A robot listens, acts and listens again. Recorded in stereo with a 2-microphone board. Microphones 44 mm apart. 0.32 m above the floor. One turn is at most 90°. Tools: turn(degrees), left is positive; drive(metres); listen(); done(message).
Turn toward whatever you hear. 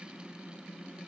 listen()
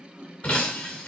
turn(degrees=30)
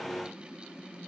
listen()
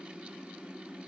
done("I heard breaking glass, but can't make it out now. It was about straight ahead or 120° left.")